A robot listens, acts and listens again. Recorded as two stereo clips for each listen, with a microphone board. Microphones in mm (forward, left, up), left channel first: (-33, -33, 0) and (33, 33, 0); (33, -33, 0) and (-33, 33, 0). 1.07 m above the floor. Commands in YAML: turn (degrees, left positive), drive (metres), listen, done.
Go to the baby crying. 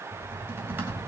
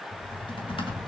listen: true
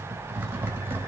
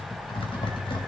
listen: true
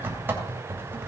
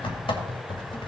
done: "I can't make out a baby crying, only typing on a keyboard."